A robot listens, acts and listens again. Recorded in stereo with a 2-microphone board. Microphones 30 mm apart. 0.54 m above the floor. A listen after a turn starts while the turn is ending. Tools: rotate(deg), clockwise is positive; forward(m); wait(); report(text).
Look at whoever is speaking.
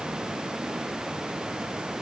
wait()
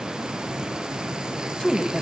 rotate(-25)
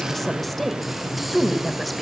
report("Facing the woman speaking.")